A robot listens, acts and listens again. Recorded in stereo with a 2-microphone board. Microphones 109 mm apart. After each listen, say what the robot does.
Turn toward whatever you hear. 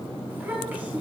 Turn 15° right.
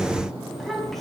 Turn 30° left.
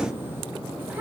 Turn 20° right.
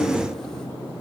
Keep listening.
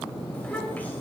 Turn 20° left.
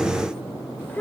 Turn 20° left.
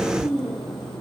Turn 10° left.
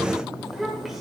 Facing the child speaking.